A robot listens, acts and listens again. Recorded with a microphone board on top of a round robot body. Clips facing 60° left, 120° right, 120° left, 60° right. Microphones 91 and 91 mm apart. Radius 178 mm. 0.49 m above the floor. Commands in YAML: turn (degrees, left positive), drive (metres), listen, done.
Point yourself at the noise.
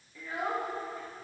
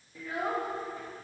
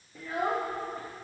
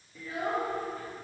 turn: 165
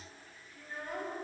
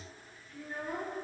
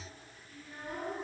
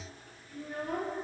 turn: -30
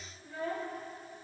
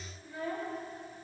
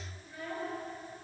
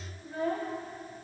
done: "Facing the child speaking."